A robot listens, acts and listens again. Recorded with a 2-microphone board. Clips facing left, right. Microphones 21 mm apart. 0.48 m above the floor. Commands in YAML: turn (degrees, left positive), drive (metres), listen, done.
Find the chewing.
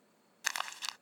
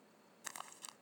listen: true
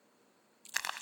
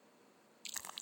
turn: -45
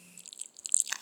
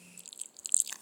done: "Facing the chewing."